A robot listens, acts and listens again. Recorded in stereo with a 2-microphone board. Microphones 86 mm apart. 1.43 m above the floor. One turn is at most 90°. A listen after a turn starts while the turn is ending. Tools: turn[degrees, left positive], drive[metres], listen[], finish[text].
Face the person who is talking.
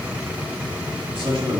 Action: turn[-90]
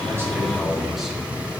Action: finish[Found it: a man speaking, straight ahead.]